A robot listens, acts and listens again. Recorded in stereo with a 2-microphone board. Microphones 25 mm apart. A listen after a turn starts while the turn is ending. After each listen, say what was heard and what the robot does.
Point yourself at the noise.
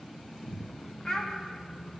The child speaking: about 25° left or 155° left. Turn 25° left.
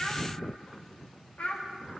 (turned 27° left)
So it is at 130° left. Turn 130° left.
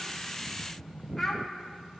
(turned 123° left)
Facing the child speaking, 1 to 2 m away.